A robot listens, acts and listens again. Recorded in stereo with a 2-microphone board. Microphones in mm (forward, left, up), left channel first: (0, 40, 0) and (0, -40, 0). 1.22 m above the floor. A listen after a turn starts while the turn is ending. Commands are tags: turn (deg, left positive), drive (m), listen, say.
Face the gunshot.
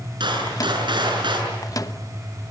<turn deg="-75"/>
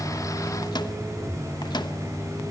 <listen/>
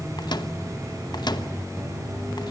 <say>I heard a gunshot, but can't make it out now. It was about straight ahead or 30° right.</say>